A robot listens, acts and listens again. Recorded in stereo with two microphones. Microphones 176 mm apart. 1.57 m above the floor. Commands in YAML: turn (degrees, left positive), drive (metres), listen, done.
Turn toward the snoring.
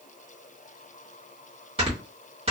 turn: -35
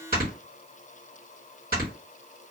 turn: -110
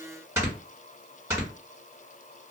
turn: -20
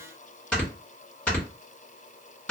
done: "Found it: snoring, straight ahead, 1 to 2 m away."